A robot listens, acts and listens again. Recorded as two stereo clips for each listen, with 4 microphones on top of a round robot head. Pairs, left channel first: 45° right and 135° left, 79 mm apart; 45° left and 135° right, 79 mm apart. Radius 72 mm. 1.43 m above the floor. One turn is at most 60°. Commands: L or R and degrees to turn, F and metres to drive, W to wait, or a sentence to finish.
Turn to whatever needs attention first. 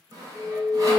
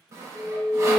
L60
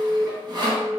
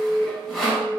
L25
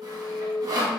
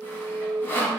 Found it: an alarm, straight ahead, 1 to 2 m away.